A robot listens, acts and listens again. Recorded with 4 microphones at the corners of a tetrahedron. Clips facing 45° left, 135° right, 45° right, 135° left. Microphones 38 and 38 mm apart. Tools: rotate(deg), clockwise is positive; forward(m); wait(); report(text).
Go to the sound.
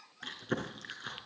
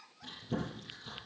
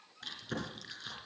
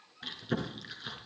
rotate(-60)
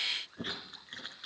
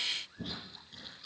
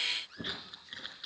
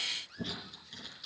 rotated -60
rotate(-10)
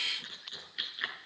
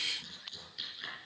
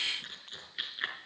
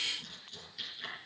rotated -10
forward(1.0)
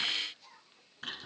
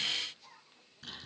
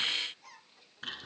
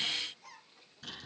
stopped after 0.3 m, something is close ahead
report("Blocked. The chewing is further on, straight ahead.")